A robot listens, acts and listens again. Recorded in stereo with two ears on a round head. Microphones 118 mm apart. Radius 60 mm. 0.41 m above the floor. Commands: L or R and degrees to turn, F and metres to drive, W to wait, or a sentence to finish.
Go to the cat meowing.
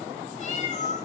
L60
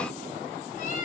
L55
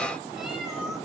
W
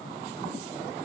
W
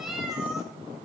F1.0
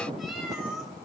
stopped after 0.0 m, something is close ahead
Something is in my way. I am facing the cat meowing but have not reached it.